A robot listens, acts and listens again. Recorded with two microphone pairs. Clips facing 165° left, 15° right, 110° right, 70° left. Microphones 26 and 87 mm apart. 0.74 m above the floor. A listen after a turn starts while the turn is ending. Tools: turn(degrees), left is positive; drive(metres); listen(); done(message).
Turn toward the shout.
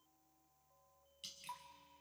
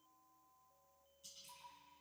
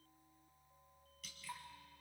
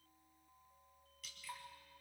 listen()
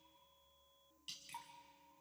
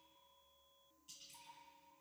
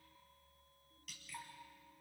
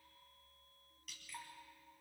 listen()
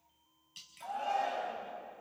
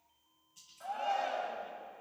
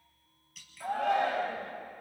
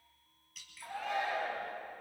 turn(degrees=-90)
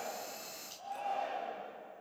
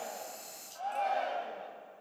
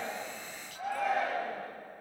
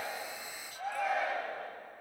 turn(degrees=-20)
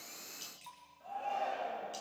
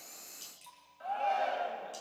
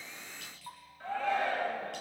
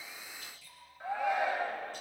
done("Facing the shout.")